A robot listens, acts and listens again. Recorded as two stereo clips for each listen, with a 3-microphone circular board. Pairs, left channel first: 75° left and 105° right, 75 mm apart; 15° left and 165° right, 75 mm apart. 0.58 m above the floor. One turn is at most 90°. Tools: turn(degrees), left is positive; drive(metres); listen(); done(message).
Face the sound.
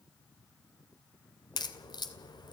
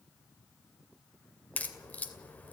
turn(degrees=85)
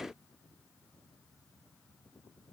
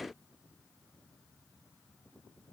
done("I heard a crack from this way, but can't make it out now.")